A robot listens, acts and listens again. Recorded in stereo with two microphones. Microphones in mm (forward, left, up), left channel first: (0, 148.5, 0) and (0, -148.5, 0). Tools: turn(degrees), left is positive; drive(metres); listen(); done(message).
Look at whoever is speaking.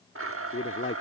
turn(degrees=40)
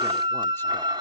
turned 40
listen()
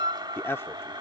turn(degrees=10)
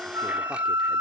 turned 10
listen()
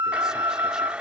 listen()
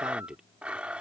done("Facing the man speaking.")